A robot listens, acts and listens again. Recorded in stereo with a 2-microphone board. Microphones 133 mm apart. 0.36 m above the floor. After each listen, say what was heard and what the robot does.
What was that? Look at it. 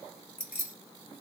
Turn 30° right.
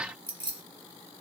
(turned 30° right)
So it is at 140° right. Turn 140° right.
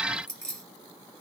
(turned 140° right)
Found it: keys jangling, straight ahead, 1 to 2 m away.